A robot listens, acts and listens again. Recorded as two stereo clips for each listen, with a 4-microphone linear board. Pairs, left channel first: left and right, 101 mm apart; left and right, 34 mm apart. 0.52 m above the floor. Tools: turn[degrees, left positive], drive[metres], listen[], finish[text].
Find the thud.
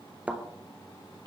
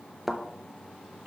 Action: turn[-30]
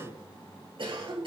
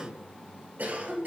Action: listen[]
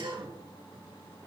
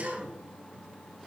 Action: finish[I heard a thud, but can't make it out now. It was about 15° left or 135° right.]